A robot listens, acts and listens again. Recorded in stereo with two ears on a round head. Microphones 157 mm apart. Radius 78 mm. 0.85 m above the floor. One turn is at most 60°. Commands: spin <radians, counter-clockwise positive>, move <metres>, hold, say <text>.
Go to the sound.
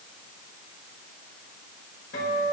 spin 1.05
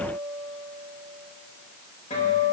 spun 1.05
spin 0.79
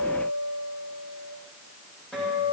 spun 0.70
move 1.0
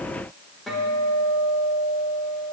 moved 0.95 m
move 1.0
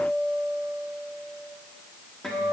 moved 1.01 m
move 1.0
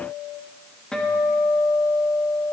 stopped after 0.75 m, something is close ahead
say I am next to the guitar.